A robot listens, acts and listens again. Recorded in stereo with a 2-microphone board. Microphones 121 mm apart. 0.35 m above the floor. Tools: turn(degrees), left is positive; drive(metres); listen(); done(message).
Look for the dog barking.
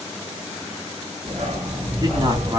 turn(degrees=-90)
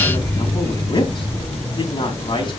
turn(degrees=10)
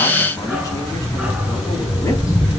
turn(degrees=-10)
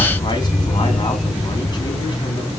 done("Found it: a dog barking, straight ahead.")